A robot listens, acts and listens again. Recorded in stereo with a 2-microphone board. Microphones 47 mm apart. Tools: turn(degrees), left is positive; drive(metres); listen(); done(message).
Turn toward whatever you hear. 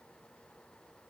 listen()
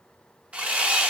turn(degrees=-25)
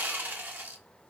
turn(degrees=-130)
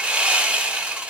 turn(degrees=-25)
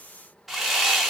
done("Facing the sawing.")